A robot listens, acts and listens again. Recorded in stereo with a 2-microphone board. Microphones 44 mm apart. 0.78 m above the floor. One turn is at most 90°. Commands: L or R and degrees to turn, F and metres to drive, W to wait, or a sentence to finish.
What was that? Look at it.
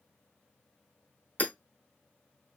L40
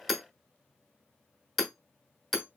Facing the hammering.